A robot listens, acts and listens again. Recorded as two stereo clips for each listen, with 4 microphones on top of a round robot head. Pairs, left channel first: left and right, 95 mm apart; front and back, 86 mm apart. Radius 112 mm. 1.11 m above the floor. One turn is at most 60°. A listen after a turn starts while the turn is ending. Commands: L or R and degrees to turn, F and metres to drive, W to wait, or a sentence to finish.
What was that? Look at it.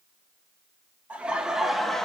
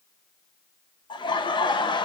Facing the laughter, 1 to 2 m away.